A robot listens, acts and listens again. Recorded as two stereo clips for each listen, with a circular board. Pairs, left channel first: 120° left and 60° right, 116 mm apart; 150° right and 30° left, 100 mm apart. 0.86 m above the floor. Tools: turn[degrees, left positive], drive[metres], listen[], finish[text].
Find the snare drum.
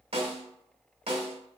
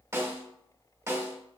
Thought: The snare drum: 35° right.
Action: turn[-35]
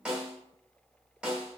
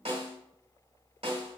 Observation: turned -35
Thought: The snare drum is now 20° left.
Action: turn[20]
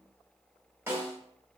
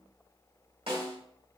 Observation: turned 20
Action: finish[Found it: a snare drum, straight ahead.]